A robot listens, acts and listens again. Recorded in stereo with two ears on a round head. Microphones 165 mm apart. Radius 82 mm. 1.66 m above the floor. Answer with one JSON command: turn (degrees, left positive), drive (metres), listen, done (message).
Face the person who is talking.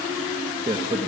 {"turn": -35}
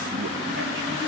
{"listen": true}
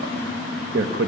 {"turn": -105}
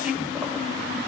{"listen": true}
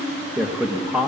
{"done": "Found it: a man speaking, straight ahead, 1 to 2 m away."}